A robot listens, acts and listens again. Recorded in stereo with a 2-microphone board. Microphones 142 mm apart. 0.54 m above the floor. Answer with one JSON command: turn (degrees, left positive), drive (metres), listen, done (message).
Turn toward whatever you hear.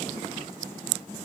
{"listen": true}
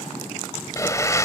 {"turn": 20}
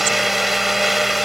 {"done": "Facing the blender."}